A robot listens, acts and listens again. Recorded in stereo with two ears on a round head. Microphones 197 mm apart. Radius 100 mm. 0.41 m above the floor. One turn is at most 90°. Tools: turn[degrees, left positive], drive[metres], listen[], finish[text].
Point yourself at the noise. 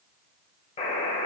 Thought: The buzzer: about 25° left or 155° left.
Action: turn[25]
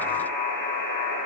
Thought: So it is at 125° left.
Action: turn[90]
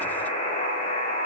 Thought: The buzzer is now 30° left.
Action: turn[30]
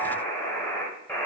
Thought: The buzzer is now 10° left.
Action: turn[10]
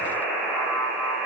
Action: finish[Facing the buzzer.]